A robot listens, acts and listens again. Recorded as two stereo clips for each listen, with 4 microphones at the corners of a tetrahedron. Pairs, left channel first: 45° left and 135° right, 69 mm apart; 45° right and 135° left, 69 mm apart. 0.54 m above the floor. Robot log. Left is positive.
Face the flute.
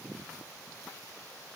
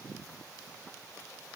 cmd idle
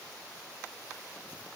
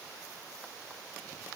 cmd idle
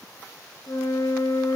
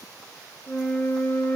note: The flute: 25° left.
cmd yaw +25
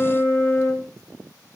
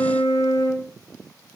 end: Facing the flute, 1 to 2 m away.